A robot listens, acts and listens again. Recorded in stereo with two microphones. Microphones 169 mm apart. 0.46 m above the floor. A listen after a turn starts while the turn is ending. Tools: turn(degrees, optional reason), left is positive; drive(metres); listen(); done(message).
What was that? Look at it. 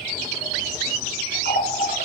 turn(degrees=75, reason="The running tap: about 75° left or 105° left.")
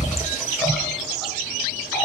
done("Facing the running tap.")